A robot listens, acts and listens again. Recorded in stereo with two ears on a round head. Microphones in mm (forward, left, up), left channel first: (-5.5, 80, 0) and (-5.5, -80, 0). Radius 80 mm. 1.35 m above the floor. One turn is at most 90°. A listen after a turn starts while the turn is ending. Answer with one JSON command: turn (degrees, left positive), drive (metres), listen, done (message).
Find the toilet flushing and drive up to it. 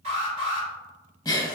{"listen": true}
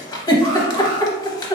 {"listen": true}
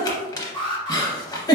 {"done": "I can't make out a toilet flushing, only an alarm and a giggle."}